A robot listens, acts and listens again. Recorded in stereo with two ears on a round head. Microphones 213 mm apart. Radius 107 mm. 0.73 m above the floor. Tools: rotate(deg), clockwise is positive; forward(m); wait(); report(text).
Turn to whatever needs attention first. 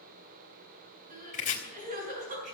rotate(35)
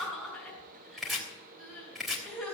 report("Facing the crying.")